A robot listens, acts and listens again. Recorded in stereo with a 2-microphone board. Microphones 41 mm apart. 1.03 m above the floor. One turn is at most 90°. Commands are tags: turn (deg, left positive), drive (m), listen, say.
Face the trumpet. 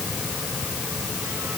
<listen/>
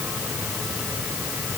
<listen/>
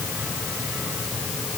<say>I can't make out a trumpet.</say>